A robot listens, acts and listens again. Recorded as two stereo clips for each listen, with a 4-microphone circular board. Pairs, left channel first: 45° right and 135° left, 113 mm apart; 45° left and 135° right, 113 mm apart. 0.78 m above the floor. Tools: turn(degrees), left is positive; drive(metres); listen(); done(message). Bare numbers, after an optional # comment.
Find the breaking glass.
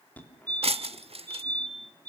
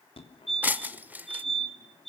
# The breaking glass: 150° left.
turn(150)
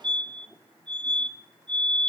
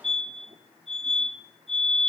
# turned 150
done("I heard breaking glass from this way, but can't make it out now.")